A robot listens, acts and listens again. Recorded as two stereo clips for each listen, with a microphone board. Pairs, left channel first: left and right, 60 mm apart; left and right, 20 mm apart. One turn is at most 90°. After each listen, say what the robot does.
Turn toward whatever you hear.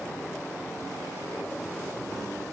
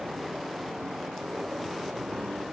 Keep listening.
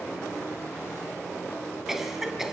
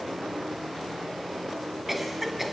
Turn 30° right.
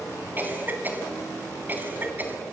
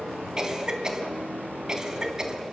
Turn 90° right.
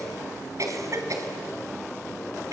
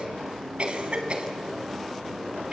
Turn 75° right.
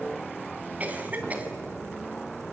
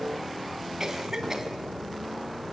Turn 30° right.
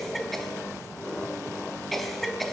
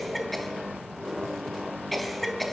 Found it: a cough, straight ahead.